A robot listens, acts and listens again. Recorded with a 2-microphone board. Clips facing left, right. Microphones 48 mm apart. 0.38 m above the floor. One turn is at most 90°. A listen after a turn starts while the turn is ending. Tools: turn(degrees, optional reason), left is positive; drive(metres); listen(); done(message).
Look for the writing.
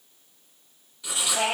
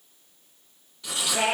turn(degrees=30)
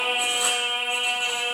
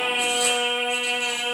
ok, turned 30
listen()
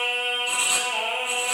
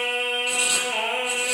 listen()
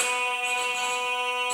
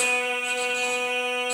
done("I heard writing, but can't make it out now. It was about 30° right or 150° left.")